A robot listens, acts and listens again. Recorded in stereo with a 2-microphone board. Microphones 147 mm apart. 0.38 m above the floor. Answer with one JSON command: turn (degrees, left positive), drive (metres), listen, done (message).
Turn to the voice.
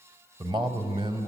{"turn": -35}
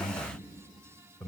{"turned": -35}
{"done": "Found it: a man speaking, straight ahead, 1 to 2 m away."}